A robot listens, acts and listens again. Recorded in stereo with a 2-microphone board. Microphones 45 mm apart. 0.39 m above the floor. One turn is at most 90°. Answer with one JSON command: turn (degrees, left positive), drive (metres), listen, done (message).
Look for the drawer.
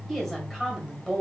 {"listen": true}
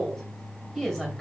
{"listen": true}
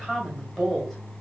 {"done": "I can't make out a drawer to turn to."}